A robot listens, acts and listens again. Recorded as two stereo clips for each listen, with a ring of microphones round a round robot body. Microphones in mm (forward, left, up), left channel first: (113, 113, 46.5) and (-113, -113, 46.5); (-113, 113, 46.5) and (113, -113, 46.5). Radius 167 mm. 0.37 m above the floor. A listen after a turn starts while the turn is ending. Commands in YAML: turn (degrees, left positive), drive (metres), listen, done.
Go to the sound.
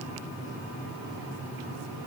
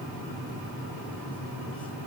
listen: true
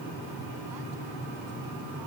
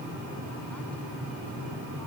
listen: true
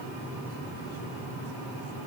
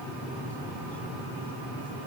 done: "I can't make out anything."